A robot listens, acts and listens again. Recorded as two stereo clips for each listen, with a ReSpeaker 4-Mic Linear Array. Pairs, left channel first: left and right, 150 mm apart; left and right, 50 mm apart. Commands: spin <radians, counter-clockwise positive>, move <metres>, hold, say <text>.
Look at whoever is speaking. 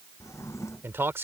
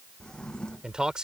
spin -0.26
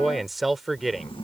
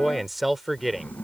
say Facing the man speaking.